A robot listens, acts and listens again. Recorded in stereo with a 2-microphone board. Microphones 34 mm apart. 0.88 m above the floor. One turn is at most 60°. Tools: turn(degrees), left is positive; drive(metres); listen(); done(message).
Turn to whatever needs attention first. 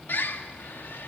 listen()
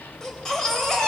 turn(degrees=15)
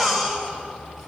done("Facing the baby crying.")